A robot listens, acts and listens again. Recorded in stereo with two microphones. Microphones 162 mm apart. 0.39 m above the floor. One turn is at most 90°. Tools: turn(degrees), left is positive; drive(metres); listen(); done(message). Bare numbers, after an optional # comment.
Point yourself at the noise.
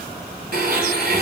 # The blender: about 70° right or 110° right.
turn(-70)
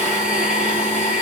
done("Facing the blender, 1 to 2 m away.")